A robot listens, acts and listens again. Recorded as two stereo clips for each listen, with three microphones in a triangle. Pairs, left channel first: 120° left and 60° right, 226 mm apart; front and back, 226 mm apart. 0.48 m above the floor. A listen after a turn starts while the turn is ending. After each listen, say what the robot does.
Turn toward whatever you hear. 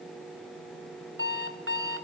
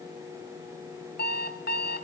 Turn 40° right.
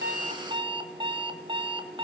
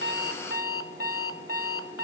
Found it: an alarm clock, straight ahead.